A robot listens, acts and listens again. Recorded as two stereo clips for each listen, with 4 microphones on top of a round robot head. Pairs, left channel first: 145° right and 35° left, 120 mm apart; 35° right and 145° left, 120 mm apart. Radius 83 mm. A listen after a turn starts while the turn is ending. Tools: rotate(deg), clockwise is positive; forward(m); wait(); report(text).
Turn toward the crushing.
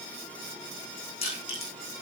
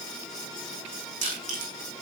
rotate(-170)
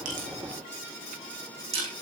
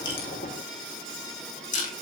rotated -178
report("Facing the crushing, over 4 m away.")